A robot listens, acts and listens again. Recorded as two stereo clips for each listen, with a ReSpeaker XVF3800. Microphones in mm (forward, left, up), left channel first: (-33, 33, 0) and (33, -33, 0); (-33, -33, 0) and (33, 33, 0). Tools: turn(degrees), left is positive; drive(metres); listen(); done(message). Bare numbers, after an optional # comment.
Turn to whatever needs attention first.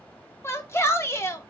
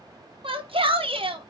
# The shout: 70° left.
turn(70)
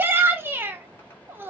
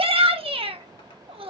# The shout is now 25° left.
turn(25)
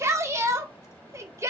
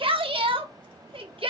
# The shout is now 15° left.
turn(15)
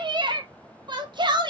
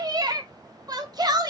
done("Facing the shout.")